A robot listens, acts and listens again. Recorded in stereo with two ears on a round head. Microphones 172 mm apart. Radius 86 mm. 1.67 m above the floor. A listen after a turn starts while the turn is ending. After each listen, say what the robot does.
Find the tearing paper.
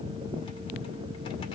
Keep listening.
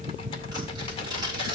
Turn 25° right.
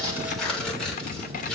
Facing the tearing paper, over 4 m away.